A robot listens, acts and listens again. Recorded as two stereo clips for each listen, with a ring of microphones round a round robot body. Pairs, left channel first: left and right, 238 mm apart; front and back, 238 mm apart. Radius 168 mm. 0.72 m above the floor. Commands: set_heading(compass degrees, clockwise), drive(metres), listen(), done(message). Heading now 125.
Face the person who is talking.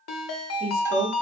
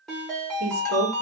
set_heading(320)
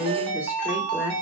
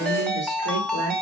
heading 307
set_heading(317)
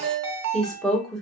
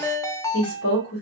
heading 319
done("Facing the woman speaking.")